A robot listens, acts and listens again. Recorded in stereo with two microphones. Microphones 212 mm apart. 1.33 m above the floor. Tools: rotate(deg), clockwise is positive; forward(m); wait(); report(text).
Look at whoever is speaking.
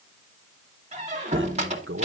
rotate(70)
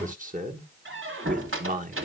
rotate(40)
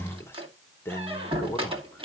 rotate(-10)
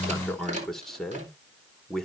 report("Facing the man speaking.")